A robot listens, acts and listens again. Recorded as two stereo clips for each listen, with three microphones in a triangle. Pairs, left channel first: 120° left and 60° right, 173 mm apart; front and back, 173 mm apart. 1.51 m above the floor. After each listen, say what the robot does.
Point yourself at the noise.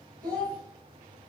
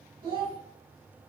Turn 120° right.
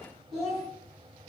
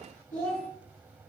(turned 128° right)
Turn 30° left.
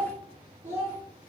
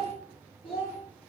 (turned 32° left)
Turn 20° left.
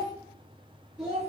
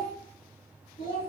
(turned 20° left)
Turn 15° left.
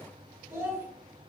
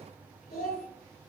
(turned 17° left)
Facing the child speaking, 2 to 4 m away.